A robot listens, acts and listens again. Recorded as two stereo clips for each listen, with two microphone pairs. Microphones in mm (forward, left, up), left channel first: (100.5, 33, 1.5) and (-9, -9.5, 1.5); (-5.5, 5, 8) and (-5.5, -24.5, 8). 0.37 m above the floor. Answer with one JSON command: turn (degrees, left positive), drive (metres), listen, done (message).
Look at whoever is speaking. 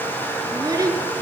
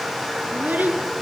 {"turn": -100}
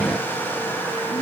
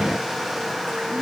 {"listen": true}
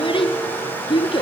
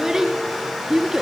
{"turn": -20}
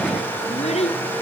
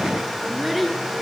{"done": "Found it: a child speaking, straight ahead."}